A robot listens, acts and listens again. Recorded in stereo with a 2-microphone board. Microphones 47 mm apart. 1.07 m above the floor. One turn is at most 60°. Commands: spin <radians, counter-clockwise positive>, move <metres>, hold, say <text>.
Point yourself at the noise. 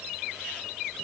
hold
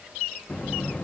spin 0.61
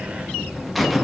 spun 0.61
say Found it: a buzzer, straight ahead, under 1 m away.